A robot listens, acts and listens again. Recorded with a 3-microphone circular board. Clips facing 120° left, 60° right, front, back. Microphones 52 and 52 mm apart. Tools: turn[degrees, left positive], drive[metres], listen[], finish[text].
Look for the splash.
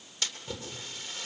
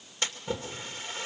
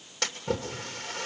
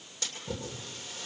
Action: finish[Facing the splash, 2 to 4 m away.]